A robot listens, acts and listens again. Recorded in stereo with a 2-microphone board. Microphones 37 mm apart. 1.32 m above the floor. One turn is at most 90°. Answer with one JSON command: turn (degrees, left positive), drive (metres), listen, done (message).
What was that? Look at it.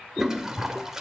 {"turn": -30}
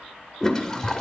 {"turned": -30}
{"turn": 15}
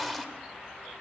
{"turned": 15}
{"done": "Found it: a toilet flushing, straight ahead."}